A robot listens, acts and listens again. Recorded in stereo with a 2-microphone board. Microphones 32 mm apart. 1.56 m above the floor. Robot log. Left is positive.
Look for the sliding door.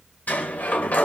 note: The sliding door: about 55° left or 125° left.
cmd yaw +55
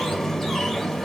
note: So it is at 15° left.
cmd yaw +15
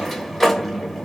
note: The sliding door is now 10° left.
cmd yaw +10
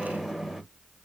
end: Facing the sliding door, 1 to 2 m away.